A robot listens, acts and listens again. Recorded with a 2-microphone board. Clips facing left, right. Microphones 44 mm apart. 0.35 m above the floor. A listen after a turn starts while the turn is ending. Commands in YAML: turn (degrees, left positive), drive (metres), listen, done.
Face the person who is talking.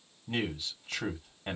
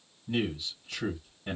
turn: 50
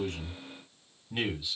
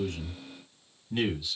turn: 15
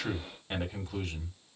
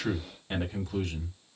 done: "Found it: a man speaking, straight ahead."